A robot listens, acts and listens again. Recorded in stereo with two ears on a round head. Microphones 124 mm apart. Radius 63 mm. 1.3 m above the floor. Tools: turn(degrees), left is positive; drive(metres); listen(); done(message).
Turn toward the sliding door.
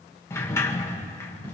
turn(degrees=20)
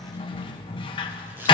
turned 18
turn(degrees=145)
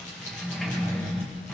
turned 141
done("Found it: a sliding door, straight ahead.")